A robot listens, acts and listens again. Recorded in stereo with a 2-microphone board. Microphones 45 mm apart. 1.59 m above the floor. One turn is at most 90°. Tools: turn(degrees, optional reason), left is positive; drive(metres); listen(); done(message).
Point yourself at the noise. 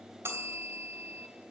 turn(degrees=-70, reason="The bell: about 70° right or 110° right.")
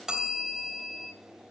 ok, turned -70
turn(degrees=-15, reason="So it is at 15° right.")
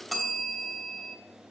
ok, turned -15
done("Found it: a bell, straight ahead, 2 to 4 m away.")